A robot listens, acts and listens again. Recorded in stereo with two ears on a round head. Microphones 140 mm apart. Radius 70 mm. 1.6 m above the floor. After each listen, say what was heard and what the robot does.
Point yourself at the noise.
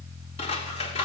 The scissors: about 40° left or 140° left. Turn 40° left.
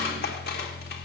So it is at 95° left. Turn 95° left.
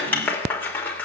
The scissors is now 10° left. Turn 10° left.
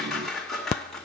Facing the scissors, 2 to 4 m away.